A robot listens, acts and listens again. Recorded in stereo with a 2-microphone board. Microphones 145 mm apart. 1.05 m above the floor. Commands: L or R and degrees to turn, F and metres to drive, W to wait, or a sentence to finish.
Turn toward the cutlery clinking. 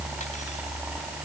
W
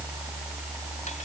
W
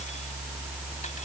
I can't make out cutlery clinking.